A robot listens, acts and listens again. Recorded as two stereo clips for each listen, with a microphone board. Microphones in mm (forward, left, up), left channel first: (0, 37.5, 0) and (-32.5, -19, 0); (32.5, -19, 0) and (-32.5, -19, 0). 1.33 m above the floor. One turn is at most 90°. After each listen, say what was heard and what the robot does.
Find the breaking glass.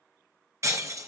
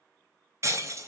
The breaking glass: 145° right. Turn 90° right.
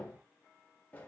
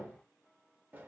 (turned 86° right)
Nothing new. It was at 60° right. Turn 60° right.
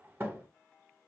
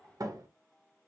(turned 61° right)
I heard breaking glass from this way, but can't make it out now.